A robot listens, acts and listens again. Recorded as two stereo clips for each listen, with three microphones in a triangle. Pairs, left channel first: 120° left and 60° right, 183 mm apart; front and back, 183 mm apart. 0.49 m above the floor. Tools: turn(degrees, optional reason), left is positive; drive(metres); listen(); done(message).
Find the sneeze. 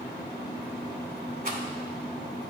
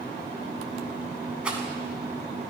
listen()
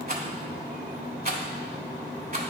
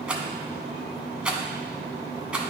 listen()
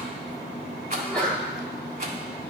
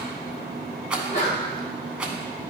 turn(degrees=35, reason="The sneeze: 35° left.")
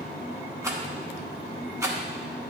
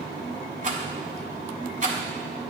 done("I heard a sneeze from this way, but can't make it out now.")